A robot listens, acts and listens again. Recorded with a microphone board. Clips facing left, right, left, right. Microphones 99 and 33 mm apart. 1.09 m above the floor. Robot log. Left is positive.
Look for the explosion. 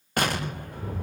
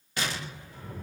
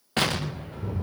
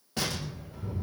note: The explosion: about 55° left or 125° left.
cmd yaw +55
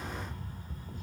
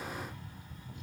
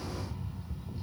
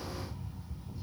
cmd idle
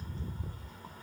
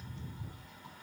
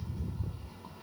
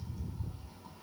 end: I heard an explosion, but can't make it out now. It was about straight ahead or 70° left.